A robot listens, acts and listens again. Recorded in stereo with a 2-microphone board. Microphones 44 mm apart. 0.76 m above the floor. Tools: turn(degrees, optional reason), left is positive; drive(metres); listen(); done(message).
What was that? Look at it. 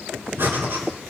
turn(degrees=-60, reason="The breathing: about 60° right or 120° right.")
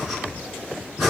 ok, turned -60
done("Found it: breathing, straight ahead, 2 to 4 m away.")